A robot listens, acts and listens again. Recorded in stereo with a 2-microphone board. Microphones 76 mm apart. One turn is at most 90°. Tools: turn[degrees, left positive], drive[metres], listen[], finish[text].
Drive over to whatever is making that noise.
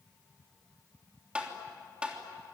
Action: turn[-30]
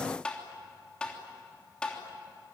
Thought: So it is at 15° left.
Action: turn[15]
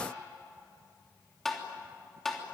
Action: drive[1.0]
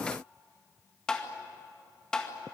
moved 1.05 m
Thought: The tapping is now 10° left.
Action: turn[10]
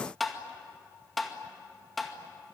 Action: drive[1.0]
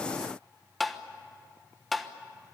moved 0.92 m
Action: drive[1.0]
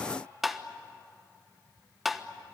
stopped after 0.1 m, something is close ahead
Action: finish[I am next to the tapping.]